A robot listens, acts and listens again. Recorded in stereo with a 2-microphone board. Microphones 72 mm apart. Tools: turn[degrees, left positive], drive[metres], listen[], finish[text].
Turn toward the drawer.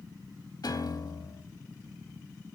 Action: listen[]
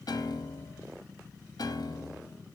Action: listen[]
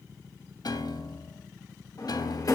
Thought: The drawer: about 50° left or 130° left.
Action: turn[50]
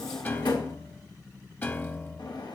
Thought: So it is at 85° left.
Action: turn[85]
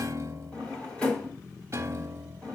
Thought: The drawer is now 15° left.
Action: turn[15]
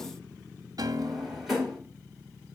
Action: finish[Facing the drawer.]